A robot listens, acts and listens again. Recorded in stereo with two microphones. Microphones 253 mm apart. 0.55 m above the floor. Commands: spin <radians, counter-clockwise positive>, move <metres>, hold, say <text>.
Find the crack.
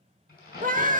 spin 0.61
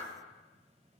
hold
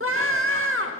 say I heard a crack, but can't make it out now. It was about straight ahead or 110° left.